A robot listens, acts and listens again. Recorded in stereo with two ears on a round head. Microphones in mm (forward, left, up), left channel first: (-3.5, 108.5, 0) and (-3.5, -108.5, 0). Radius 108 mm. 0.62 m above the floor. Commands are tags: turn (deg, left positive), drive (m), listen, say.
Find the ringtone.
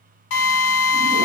<listen/>
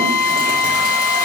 <listen/>
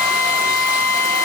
<say>I can't make out a ringtone, only a drill.</say>